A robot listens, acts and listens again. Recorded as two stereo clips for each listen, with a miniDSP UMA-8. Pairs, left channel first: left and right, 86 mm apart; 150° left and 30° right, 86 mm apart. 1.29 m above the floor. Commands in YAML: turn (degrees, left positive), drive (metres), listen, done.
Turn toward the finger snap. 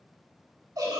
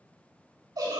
listen: true
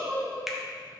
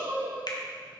turn: -175
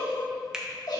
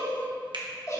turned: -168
turn: -10
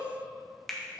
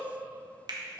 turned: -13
done: "Found it: a finger snap, straight ahead."